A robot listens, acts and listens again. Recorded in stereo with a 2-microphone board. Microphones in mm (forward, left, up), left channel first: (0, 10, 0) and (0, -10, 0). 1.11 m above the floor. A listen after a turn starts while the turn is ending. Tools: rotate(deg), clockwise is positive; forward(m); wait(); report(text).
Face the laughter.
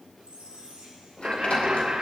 rotate(60)
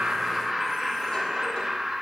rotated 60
rotate(30)
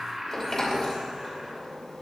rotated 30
rotate(15)
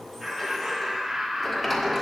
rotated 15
rotate(20)
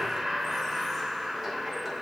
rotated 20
rotate(10)
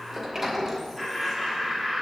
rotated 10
report("Facing the laughter.")